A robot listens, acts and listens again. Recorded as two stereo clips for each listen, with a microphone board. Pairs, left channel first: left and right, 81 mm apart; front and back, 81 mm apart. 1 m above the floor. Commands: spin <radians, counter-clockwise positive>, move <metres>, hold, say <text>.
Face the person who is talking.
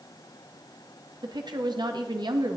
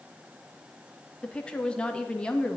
spin -1.31
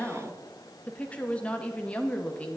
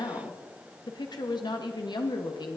spin 0.26
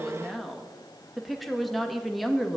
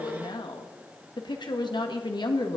say Found it: a woman speaking, straight ahead, 1 to 2 m away.